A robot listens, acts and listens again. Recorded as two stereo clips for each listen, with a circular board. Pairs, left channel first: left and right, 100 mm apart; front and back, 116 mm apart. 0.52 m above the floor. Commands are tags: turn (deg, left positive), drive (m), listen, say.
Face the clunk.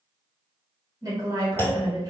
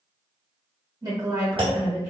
<turn deg="150"/>
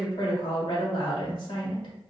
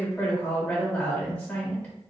<say>I heard a clunk from this way, but can't make it out now.</say>